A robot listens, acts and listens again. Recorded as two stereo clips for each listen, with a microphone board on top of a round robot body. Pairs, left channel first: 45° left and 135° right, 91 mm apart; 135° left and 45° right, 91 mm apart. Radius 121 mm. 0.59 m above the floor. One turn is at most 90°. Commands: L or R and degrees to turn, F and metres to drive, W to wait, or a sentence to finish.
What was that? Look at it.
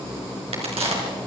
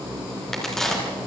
R90
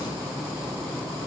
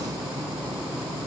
R50
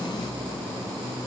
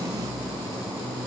Facing where the crack came from. I can't hear it now.